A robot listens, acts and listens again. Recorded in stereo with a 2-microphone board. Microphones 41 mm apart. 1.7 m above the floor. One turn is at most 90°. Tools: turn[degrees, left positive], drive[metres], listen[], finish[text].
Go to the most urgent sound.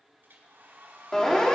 Action: turn[30]
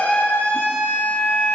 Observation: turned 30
Thought: So it is at 135° left.
Action: turn[90]
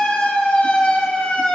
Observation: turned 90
Thought: The siren is now 35° left.
Action: turn[35]
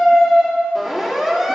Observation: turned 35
Action: drive[1.0]
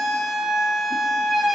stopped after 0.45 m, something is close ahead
Action: finish[Something is in my way. I am facing the siren but have not reached it.]